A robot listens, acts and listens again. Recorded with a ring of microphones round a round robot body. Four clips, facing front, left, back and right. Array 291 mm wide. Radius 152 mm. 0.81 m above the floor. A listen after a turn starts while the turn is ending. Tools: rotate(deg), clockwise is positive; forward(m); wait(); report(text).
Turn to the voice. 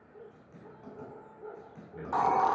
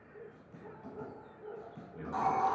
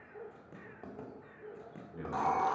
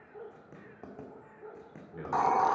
rotate(85)
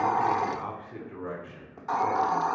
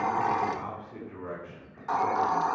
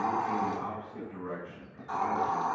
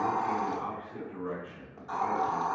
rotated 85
rotate(-10)
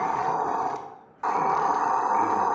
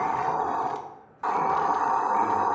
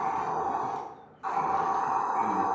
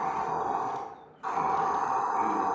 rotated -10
wait()
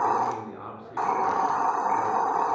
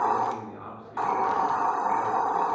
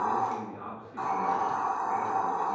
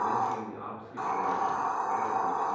report("Found it: a man speaking, straight ahead, 2 to 4 m away.")